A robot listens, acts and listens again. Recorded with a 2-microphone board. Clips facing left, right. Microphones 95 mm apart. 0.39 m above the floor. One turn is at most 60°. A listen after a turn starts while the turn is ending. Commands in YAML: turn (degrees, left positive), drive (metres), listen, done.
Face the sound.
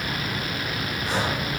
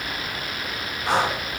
turn: -60
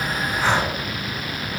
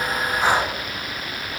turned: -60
turn: -10
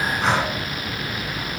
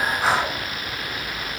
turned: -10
done: "Found it: breathing, straight ahead."